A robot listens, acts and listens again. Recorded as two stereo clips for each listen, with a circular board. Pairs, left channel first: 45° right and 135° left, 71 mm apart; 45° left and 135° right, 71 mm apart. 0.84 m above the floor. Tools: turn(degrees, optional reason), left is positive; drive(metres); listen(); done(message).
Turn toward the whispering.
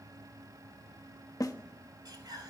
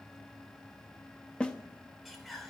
turn(degrees=135, reason="The whispering: 135° left.")
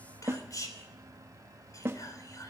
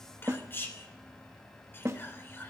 turn(degrees=-15, reason="The whispering is now 15° right.")
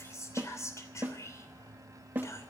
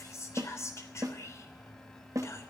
done("Facing the whispering.")